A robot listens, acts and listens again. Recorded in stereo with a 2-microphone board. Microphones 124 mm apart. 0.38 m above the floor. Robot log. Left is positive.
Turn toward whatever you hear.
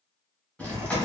cmd yaw +30
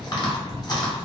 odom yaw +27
note: So it is at 145° left.
cmd yaw +145
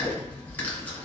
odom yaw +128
note: The chewing is now 15° left.
cmd yaw +15
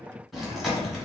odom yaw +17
end: Facing the chewing, 1 to 2 m away.